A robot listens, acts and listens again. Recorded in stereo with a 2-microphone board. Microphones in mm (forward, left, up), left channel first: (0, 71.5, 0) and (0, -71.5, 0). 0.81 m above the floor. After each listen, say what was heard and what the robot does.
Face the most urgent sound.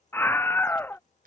The scream: about 15° left or 165° left. Turn 15° left.
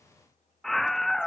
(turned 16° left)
Facing the scream.